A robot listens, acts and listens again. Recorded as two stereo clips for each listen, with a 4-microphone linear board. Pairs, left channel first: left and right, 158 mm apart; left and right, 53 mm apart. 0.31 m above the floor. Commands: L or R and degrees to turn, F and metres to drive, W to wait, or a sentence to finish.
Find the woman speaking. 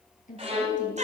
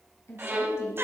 L50
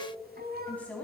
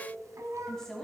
L10
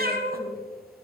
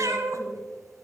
W
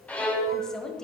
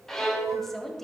Facing the woman speaking, 1 to 2 m away.